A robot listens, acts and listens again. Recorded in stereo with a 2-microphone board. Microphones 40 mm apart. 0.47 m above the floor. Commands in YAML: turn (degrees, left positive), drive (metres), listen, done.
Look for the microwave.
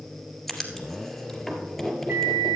turn: -60
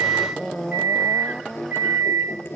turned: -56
turn: -60
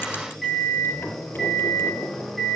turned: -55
done: "Found it: a microwave, straight ahead, 2 to 4 m away."